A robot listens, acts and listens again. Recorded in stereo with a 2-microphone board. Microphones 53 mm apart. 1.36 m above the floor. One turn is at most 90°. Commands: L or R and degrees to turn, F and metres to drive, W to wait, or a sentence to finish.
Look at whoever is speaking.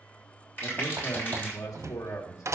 L90
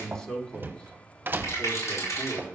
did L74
L15
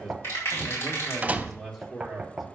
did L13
Facing the man speaking.